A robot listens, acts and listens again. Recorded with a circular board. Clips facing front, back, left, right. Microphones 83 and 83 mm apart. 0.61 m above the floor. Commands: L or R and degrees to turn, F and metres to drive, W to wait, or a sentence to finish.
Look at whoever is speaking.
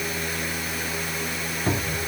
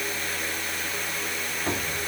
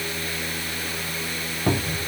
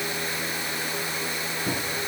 W
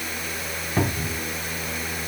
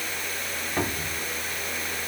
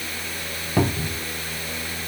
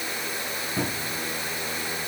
W
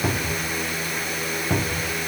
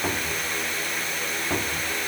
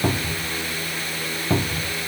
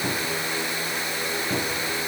I can't make out anyone speaking, only a cupboard door.